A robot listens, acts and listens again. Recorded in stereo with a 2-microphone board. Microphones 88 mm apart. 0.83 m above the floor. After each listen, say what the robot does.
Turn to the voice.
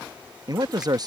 Turn 45° right.
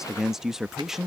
Facing the man speaking.